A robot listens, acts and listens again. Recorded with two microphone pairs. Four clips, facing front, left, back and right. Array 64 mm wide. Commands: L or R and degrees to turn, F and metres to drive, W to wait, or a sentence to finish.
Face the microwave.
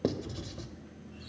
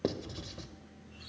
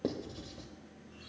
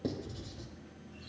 W
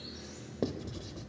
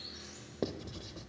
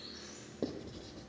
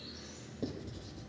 W
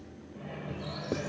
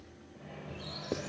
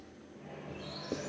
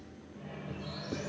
Found it: a microwave, straight ahead, 1 to 2 m away.